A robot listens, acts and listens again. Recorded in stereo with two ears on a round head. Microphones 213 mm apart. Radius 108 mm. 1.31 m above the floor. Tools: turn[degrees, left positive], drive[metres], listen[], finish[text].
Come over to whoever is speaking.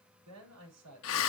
Action: turn[-90]
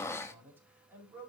Thought: So it is at 10° right.
Action: turn[-10]
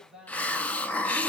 Action: drive[1.0]
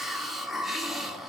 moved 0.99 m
Action: listen[]
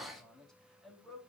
Action: drive[1.0]
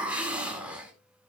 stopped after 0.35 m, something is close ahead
Action: listen[]
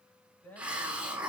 Action: finish[Something is in my way. I am facing the man speaking but have not reached it.]